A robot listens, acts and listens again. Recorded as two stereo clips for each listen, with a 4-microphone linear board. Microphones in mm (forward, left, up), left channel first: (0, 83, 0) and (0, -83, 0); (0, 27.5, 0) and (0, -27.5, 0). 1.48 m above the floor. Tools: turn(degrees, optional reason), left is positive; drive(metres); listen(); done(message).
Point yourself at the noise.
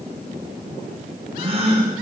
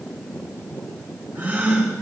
turn(degrees=-35, reason="The gasp: about 35° right or 145° right.")
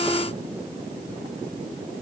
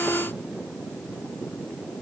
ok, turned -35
listen()
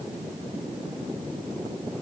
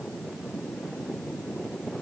done("I heard a gasp, but can't make it out now. It was about straight ahead or 110° right.")